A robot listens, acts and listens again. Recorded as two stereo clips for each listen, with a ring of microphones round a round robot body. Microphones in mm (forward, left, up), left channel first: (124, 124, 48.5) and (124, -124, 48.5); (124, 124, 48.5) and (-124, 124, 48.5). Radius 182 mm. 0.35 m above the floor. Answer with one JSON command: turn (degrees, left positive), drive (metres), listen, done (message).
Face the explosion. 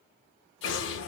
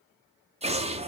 {"turn": 115}
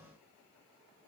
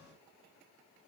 {"done": "Facing where the explosion came from. I can't hear it now."}